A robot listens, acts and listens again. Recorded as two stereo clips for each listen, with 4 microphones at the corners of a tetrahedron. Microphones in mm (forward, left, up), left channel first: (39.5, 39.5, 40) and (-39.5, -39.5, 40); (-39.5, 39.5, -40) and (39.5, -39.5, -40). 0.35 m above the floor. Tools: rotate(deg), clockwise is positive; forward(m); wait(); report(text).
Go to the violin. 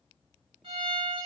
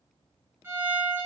rotate(110)
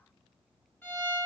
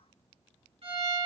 rotate(25)
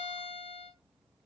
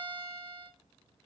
rotate(-15)
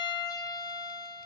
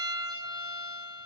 forward(1.0)
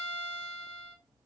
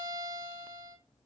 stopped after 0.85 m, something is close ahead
report("Arrived at the violin, straight ahead.")